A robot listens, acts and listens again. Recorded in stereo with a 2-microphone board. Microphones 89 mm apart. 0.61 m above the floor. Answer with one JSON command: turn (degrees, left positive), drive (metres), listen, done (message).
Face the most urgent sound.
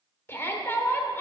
{"turn": 25}
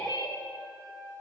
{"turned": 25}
{"turn": 125}
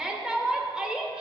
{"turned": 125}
{"turn": -10}
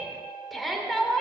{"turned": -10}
{"done": "Facing the shout, 1 to 2 m away."}